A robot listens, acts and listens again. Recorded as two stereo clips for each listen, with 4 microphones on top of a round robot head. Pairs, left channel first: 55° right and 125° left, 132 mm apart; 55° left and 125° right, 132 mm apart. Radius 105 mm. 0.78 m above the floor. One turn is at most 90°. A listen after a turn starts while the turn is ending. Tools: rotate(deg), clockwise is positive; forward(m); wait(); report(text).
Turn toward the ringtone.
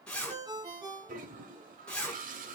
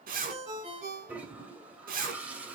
rotate(90)
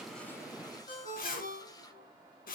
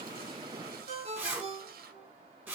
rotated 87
rotate(80)
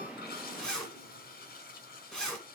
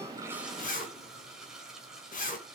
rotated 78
wait()
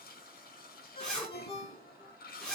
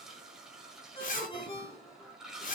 report("Facing the ringtone.")